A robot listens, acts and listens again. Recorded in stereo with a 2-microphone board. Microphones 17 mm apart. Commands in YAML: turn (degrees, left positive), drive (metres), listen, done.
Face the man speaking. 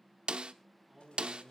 turn: -30
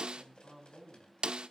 turn: 20
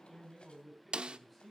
done: "Facing the man speaking, over 4 m away."